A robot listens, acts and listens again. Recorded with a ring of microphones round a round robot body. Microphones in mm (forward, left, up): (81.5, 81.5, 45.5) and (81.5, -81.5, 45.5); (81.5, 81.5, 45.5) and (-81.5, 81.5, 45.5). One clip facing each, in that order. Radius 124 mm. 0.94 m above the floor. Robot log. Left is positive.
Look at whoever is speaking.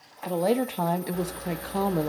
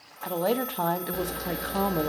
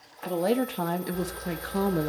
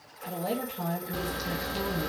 end: Found it: a woman speaking, straight ahead, 1 to 2 m away.